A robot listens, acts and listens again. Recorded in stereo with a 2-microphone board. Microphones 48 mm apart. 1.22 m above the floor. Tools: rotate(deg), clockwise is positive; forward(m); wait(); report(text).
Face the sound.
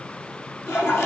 rotate(-70)
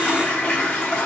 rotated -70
rotate(-35)
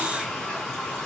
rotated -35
rotate(-15)
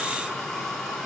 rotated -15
report("Found it: a toilet flushing, straight ahead, 2 to 4 m away.")